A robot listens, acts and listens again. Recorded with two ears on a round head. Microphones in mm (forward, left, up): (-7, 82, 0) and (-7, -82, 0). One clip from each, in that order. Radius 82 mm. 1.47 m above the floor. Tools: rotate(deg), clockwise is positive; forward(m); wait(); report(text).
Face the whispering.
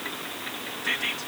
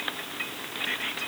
rotate(-20)
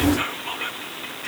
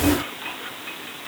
rotate(-145)
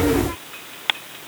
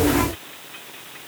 wait()
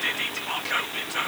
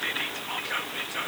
rotate(-15)
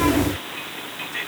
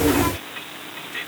report("Facing the whispering.")